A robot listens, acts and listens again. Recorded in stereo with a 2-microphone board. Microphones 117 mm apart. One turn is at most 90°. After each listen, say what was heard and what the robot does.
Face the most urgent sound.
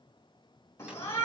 The shout: about 25° left or 155° left. Turn 25° left.
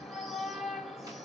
Found it: a shout, straight ahead.